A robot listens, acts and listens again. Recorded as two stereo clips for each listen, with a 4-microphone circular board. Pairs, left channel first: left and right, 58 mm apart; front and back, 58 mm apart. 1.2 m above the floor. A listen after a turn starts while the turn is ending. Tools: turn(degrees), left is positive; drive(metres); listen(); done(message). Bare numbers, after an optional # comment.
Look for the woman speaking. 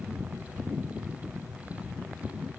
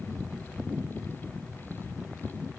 listen()
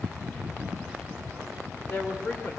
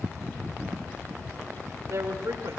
# The woman speaking: 155° left.
turn(155)
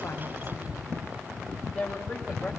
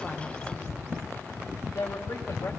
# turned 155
# The woman speaking is now 10° left.
turn(10)
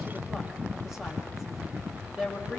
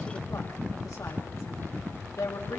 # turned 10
done("Found it: a woman speaking, straight ahead, over 4 m away.")